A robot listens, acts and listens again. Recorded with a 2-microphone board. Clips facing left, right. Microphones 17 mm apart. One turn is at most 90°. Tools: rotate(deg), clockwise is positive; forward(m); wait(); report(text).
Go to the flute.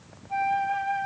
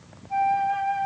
rotate(-30)
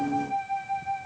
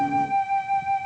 rotate(20)
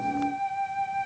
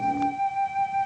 forward(1.0)
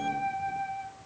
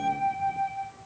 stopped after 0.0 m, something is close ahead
report("Something is in my way. I am facing the flute but have not reached it.")